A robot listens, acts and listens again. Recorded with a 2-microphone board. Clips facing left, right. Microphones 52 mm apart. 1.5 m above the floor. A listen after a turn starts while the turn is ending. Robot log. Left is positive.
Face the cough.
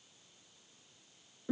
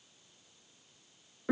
cmd idle
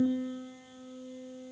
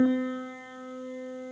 cmd idle
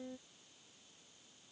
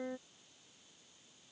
end: I can't make out a cough to turn to.